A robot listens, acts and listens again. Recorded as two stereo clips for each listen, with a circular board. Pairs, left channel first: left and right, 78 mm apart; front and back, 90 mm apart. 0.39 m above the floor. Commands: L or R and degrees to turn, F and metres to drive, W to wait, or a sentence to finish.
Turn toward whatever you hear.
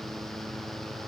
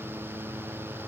W
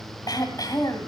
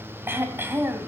L115
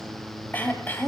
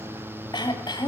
L25
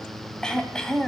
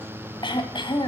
L10
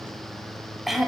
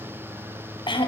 Facing the throat clearing, 1 to 2 m away.